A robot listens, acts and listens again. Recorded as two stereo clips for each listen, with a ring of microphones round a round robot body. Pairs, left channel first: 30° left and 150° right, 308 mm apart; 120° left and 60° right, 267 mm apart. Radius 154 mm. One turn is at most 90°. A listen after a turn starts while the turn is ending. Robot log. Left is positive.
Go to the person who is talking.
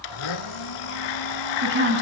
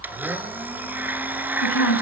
note: The woman speaking: 155° left.
cmd yaw +90
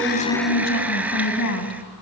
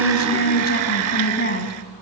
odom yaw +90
note: The woman speaking is now 70° left.
cmd yaw +70
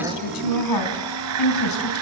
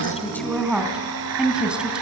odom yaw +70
note: The woman speaking is now 25° left.
cmd yaw +25
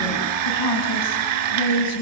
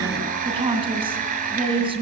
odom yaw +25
note: The woman speaking is now 10° left.
cmd yaw +10
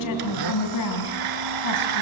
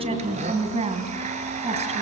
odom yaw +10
cmd fwd 1.0
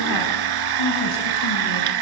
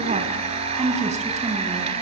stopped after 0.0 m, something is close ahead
cmd idle
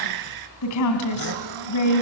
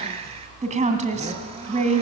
end: Blocked. The woman speaking is further on, straight ahead.